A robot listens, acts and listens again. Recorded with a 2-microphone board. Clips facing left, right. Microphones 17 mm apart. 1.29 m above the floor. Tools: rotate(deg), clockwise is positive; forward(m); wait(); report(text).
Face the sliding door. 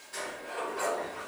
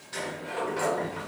rotate(55)
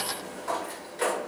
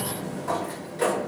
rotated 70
rotate(-10)
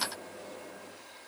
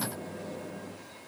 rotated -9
report("Found it: a sliding door, straight ahead.")